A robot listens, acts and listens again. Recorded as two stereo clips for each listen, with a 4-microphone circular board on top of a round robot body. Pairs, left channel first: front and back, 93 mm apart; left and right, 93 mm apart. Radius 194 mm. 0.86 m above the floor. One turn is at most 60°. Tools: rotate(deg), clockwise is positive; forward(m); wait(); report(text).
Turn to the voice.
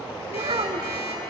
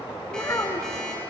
rotate(-60)
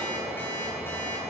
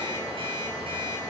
rotate(-60)
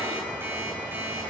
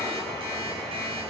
rotate(-30)
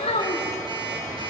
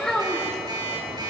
report("Found it: a child speaking, straight ahead, 2 to 4 m away.")